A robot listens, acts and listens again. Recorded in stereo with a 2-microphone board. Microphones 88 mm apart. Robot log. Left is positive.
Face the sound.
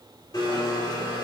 note: The blender: about 55° left or 125° left.
cmd yaw +55
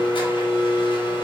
note: So it is at 70° left.
cmd yaw +70
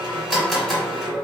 end: Facing the blender.